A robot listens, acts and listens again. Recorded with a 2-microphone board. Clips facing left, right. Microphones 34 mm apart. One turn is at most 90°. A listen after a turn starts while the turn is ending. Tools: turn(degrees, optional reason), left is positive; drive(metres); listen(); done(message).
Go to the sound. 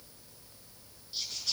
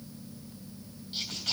turn(degrees=-55, reason="The whispering: about 55° right or 125° right.")
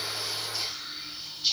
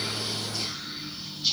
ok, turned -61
turn(degrees=10, reason="So it is at 10° left.")
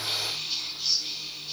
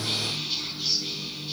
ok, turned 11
drive(metres=1.0)
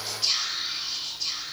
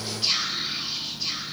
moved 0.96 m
drive(metres=1.0)
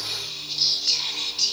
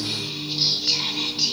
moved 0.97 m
turn(degrees=-10, reason="The whispering is now 10° right.")
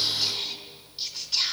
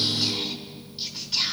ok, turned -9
drive(metres=1.0)
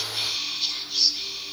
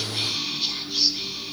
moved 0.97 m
drive(metres=1.0)
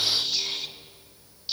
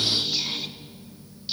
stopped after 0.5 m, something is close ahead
done("Arrived at the whispering, straight ahead.")